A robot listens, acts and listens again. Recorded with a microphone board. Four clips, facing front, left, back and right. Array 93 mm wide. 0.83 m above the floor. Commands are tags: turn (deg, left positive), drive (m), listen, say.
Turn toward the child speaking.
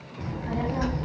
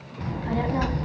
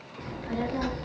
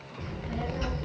<turn deg="75"/>
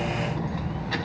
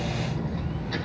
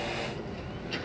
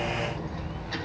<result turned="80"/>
<say>Found it: a child speaking, straight ahead, over 4 m away.</say>